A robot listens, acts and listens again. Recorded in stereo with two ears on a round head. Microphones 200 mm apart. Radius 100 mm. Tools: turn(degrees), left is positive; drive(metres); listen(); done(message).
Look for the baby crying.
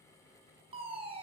listen()
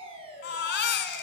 turn(degrees=50)
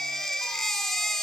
done("Found it: a baby crying, straight ahead.")